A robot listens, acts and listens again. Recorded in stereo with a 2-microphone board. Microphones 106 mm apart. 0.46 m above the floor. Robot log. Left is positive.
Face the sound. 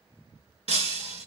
cmd yaw -90
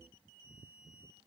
end: I heard breaking glass from this way, but can't make it out now.